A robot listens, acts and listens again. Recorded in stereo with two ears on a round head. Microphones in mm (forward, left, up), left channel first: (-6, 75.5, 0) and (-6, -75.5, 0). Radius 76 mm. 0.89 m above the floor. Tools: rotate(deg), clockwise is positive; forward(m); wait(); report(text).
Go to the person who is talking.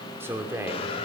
rotate(30)
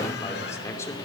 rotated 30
rotate(-15)
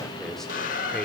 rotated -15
forward(1.0)
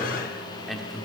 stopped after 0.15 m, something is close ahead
report("Blocked. The man speaking is further on, straight ahead.")